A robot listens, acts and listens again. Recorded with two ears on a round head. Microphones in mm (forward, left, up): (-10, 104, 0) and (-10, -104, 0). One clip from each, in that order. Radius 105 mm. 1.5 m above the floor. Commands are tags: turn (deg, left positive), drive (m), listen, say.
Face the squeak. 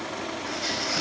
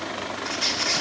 <turn deg="-90"/>
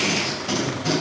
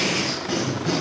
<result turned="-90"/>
<listen/>
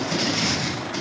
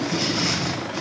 <listen/>
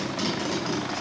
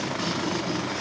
<say>I heard a squeak from this way, but can't make it out now.</say>